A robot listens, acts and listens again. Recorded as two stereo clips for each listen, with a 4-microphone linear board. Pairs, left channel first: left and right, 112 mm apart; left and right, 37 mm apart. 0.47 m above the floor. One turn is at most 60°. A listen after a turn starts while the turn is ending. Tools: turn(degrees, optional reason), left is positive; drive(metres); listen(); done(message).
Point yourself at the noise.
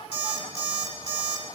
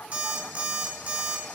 turn(degrees=-45, reason="The alarm clock: about 45° right or 135° right.")
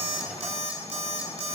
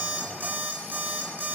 turn(degrees=-60, reason="So it is at 85° right.")
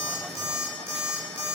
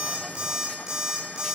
turn(degrees=-20, reason="The alarm clock is now 20° right.")
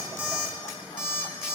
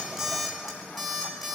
done("Found it: an alarm clock, straight ahead.")